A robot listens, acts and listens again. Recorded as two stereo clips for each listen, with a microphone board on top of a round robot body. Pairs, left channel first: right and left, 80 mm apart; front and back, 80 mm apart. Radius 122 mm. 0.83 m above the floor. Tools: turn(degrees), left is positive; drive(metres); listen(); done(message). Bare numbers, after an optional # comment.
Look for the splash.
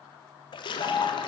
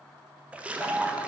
# The splash: 105° right.
turn(-105)
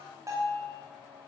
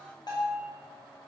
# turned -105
done("Facing where the splash came from. I can't hear it now.")